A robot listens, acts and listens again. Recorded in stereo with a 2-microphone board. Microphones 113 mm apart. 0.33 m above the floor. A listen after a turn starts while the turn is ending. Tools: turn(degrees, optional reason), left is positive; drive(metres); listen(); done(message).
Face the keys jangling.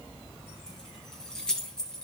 turn(degrees=30)
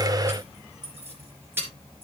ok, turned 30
turn(degrees=-20, reason="So it is at 20° right.")
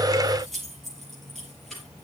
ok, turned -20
done("Facing the keys jangling.")